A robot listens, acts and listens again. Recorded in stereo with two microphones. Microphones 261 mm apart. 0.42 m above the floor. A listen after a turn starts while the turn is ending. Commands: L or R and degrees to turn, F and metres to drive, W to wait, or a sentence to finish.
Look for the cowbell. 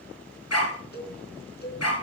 L40
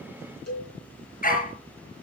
L100
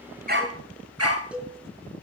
Found it: a cowbell, straight ahead, 2 to 4 m away.